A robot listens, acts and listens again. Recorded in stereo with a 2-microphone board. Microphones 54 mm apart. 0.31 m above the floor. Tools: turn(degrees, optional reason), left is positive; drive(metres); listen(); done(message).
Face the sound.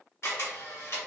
turn(degrees=55, reason="The camera shutter: about 55° left or 125° left.")
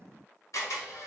turn(degrees=75, reason="So it is at 75° left.")
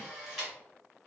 done("Found it: a camera shutter, straight ahead.")